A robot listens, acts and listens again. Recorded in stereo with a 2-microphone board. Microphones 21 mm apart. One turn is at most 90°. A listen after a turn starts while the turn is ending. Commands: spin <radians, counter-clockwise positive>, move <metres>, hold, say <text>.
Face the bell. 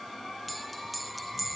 spin 0.52
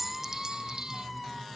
hold
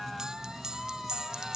spin -0.61
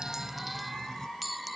say Facing the bell.